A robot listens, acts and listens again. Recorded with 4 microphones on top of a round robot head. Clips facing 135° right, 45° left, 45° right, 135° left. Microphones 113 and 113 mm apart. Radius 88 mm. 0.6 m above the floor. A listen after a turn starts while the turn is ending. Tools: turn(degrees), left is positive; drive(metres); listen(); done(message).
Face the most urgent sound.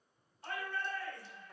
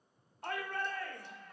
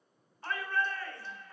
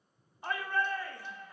turn(degrees=60)
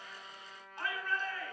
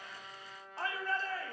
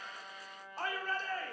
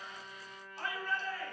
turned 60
done("Facing the shout.")